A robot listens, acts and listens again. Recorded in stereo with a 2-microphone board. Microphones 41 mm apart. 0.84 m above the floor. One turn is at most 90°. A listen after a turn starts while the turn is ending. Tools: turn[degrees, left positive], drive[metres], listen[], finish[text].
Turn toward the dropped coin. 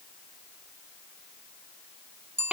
Action: listen[]
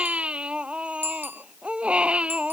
Action: listen[]
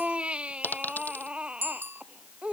Thought: The dropped coin: about 50° left or 130° left.
Action: turn[50]
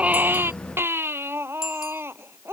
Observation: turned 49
Action: listen[]
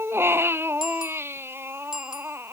Action: finish[I heard a dropped coin, but can't make it out now. It was about straight ahead or 80° left.]